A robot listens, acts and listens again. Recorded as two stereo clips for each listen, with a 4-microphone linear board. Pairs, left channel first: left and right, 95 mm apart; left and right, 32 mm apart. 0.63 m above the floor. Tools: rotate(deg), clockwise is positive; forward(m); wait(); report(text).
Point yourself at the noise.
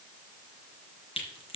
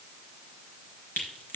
rotate(-90)
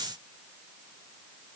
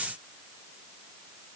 report("Facing where the crack came from. I can't hear it now.")